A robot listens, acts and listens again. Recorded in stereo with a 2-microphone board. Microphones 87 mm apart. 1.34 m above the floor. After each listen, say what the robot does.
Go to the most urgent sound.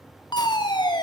Turn 60° left.
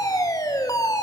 Turn 50° left.
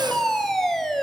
Drive 1.0 m forward.
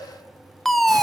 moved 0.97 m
Drive 1.0 m forward.
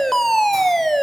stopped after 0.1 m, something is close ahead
I am next to the fire alarm.